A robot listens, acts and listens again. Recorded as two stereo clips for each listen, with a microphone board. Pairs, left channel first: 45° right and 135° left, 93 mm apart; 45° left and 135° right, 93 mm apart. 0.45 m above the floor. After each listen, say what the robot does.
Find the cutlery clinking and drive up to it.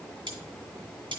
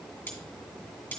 Turn 115° left.
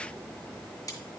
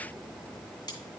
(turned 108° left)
Turn 10° left.
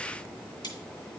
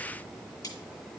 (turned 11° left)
Drive 1.0 m forward.
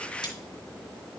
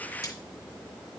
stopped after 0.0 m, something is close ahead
Keep listening.
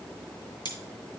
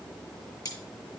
Blocked. The cutlery clinking is further on, straight ahead.